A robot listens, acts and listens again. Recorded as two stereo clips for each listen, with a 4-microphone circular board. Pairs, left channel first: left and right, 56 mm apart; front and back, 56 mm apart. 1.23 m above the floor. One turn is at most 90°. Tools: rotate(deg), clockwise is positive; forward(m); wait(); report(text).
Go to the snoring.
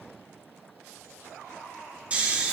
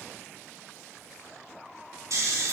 rotate(90)
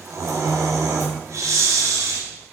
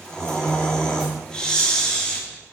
rotate(75)
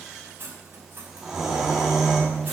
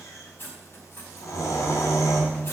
forward(1.0)
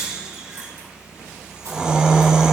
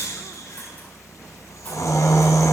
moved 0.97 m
rotate(15)
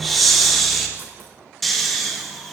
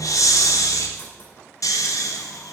forward(1.0)
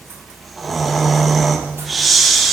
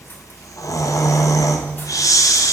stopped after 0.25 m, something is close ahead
report("Arrived at the snoring, straight ahead.")